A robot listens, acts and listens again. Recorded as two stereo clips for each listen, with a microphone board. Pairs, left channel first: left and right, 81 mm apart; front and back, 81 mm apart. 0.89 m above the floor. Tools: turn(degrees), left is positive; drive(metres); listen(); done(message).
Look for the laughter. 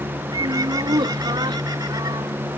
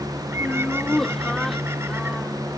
turn(degrees=-85)
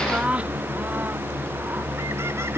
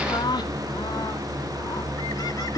turn(degrees=-20)
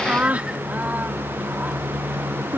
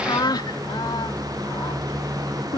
turn(degrees=-20)
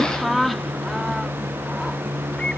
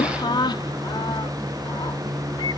done("Facing the laughter.")